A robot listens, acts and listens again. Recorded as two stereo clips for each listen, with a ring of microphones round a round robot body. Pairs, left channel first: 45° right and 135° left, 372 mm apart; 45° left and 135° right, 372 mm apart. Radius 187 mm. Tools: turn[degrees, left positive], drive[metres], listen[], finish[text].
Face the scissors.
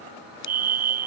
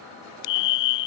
Thought: The scissors: 15° left.
Action: turn[15]
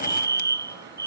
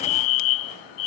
Action: listen[]
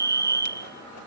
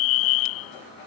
Action: listen[]
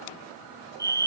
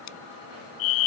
Action: finish[Facing where the scissors came from. I can't hear it now.]